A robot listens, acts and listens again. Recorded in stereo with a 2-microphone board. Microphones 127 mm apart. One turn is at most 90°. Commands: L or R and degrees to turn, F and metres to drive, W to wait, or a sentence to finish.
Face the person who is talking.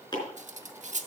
W
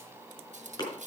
W
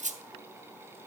I can't make out anyone speaking to turn to.